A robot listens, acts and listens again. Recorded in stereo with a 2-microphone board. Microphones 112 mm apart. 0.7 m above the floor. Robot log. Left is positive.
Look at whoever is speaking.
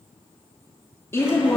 note: The woman speaking: about 20° left or 160° left.
cmd yaw +20
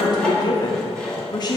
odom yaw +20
note: So it is at 135° left.
cmd yaw +135
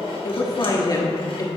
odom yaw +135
note: The woman speaking is now 40° left.
cmd yaw +40
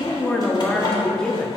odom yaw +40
note: The woman speaking is now 10° left.
cmd yaw +10
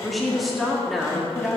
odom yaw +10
end: Found it: a woman speaking, straight ahead, under 1 m away.